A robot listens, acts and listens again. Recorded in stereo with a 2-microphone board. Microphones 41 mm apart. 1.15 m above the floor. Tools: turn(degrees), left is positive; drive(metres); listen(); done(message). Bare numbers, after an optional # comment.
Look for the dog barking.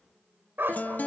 # The dog barking: about 70° right or 110° right.
turn(-70)
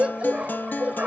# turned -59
# So it is at 40° right.
turn(-40)
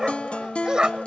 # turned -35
# The dog barking is now 20° right.
turn(-20)
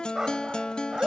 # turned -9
# The dog barking is now 20° right.
turn(-20)
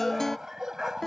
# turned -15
# The dog barking is now 10° right.
turn(-10)
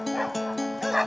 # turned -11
done("Facing the dog barking.")